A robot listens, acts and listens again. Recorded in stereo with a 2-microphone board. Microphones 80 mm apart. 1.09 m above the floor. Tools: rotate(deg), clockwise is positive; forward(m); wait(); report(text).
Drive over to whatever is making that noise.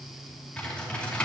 rotate(-15)
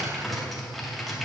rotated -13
forward(1.0)
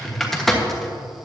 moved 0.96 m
forward(1.0)
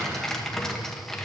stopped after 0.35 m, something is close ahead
report("I am next to the typing on a keyboard.")